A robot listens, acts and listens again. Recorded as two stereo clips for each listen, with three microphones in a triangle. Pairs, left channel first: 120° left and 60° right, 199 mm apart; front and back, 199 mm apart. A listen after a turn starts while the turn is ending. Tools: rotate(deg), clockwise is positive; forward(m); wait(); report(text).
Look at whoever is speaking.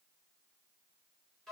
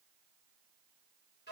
wait()
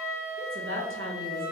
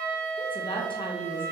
rotate(65)
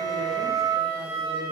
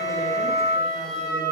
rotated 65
wait()
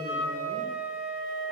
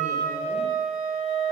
wait()
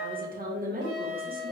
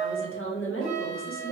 rotate(10)
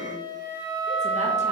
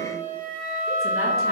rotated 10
wait()
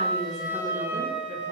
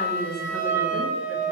report("Facing the woman speaking.")